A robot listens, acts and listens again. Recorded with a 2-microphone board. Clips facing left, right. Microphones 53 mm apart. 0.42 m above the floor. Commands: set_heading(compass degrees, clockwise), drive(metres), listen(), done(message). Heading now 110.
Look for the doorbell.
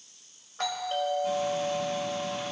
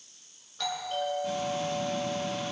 set_heading(70)
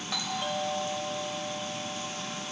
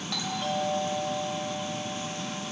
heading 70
set_heading(60)
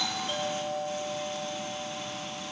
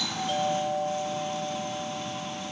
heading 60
done("Facing the doorbell.")